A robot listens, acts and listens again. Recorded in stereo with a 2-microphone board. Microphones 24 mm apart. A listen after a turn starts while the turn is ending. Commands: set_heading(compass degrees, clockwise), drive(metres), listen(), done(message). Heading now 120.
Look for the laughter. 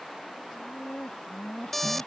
set_heading(65)
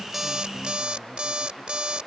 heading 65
listen()
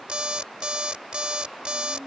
set_heading(80)
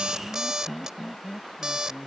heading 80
done("Found it: laughter, straight ahead.")